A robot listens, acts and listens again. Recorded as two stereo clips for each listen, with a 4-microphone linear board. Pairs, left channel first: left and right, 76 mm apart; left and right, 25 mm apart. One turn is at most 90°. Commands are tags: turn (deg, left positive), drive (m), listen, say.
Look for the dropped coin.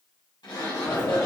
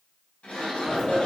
<turn deg="25"/>
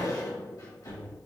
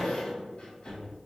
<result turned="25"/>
<turn deg="90"/>
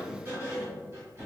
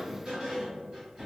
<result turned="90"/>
<turn deg="35"/>
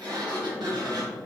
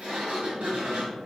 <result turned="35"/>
<say>Facing where the dropped coin came from. I can't hear it now.</say>